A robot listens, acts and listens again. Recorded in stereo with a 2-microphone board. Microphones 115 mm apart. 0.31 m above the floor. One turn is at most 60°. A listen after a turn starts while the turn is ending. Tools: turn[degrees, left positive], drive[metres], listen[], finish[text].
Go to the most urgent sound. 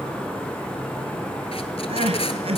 Thought: The crying: about 60° right or 120° right.
Action: turn[-60]
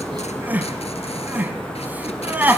Thought: So it is at 15° right.
Action: turn[-15]
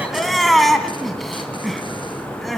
Action: drive[1.0]
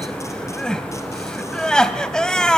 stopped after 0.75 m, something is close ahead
Thought: The crying is now 10° left.
Action: turn[10]
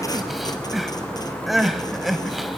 Action: finish[I am next to the crying.]